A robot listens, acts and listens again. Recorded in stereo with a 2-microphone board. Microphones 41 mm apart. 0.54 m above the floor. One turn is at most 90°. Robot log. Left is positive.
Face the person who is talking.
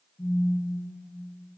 cmd idle
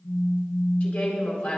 note: The woman speaking: about 30° left or 150° left.
cmd yaw +30
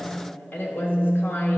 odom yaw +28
note: So it is at 120° left.
cmd yaw +90
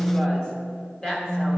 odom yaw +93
note: The woman speaking is now 25° left.
cmd yaw +25
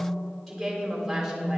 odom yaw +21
end: Facing the woman speaking.